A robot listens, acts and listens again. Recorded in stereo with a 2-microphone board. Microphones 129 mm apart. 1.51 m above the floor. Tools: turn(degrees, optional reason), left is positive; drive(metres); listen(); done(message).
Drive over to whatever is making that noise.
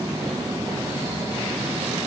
listen()
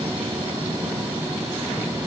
listen()
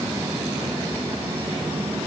done("I can't make out anything.")